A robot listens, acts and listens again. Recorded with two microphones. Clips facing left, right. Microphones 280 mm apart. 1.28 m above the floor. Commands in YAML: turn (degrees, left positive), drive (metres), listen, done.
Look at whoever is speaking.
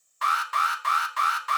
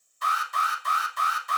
listen: true
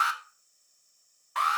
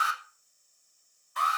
listen: true
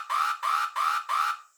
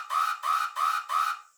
done: "I can't make out anyone speaking, only an alarm."